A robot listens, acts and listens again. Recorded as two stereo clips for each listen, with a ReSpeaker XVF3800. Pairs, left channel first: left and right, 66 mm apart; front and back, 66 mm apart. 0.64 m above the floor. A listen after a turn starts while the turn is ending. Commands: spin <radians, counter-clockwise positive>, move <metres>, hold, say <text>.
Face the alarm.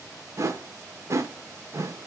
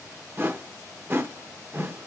hold
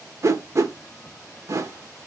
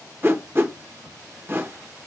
hold
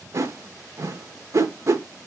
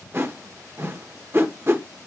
say I can't make out an alarm, only a whoosh.